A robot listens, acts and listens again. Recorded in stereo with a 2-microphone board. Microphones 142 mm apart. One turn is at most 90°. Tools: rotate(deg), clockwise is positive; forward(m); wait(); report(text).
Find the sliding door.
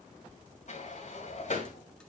rotate(-60)
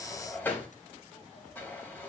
rotate(-15)
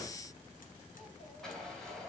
report("Facing the sliding door, 2 to 4 m away.")